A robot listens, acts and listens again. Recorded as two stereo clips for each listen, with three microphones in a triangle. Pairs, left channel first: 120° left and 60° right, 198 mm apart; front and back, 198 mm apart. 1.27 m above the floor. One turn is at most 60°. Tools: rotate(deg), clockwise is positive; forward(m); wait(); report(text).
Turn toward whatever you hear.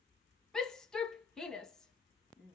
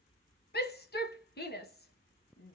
rotate(-35)
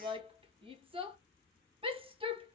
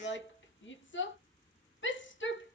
report("Found it: a shout, straight ahead.")